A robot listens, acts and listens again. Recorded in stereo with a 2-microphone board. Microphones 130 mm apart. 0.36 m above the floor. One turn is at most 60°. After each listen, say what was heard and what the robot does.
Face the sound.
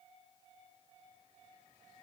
Keep listening.
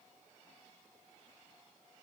Keep listening.
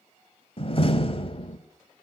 The door slam: about 45° left or 135° left. Turn 45° left.
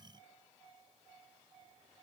Keep listening.
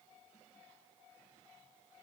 I heard a door slam, but can't make it out now. It was about straight ahead or 90° left.